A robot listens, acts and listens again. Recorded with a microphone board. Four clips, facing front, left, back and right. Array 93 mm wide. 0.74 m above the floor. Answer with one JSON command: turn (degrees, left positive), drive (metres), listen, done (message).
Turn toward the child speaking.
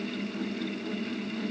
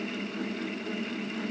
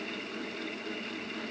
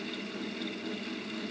{"listen": true}
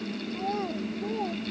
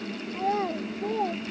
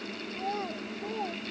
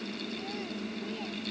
{"turn": 90}
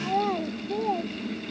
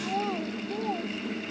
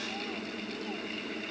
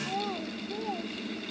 {"turn": 10}
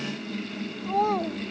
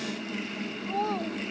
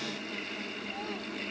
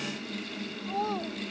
{"done": "Facing the child speaking."}